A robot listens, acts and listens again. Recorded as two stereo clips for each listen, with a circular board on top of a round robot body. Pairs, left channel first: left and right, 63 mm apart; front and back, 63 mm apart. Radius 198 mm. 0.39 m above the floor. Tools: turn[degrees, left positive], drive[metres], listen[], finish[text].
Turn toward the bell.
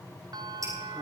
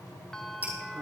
Thought: The bell: 80° right.
Action: turn[-80]
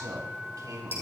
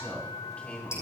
Action: finish[Facing the bell.]